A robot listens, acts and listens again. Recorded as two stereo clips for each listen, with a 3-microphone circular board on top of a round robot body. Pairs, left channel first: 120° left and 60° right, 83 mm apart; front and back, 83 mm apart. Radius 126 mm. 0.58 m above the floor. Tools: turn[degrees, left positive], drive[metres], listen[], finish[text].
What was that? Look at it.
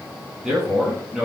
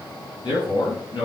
Thought: The man speaking: 25° left.
Action: turn[25]
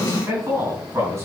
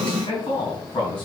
Action: finish[Facing the man speaking.]